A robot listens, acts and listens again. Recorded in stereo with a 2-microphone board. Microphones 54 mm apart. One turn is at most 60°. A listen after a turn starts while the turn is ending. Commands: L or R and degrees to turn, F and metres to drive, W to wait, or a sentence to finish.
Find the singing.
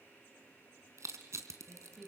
R30
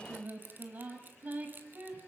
R60
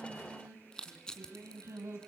R60
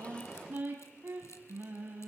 R40
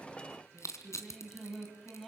Facing the singing, over 4 m away.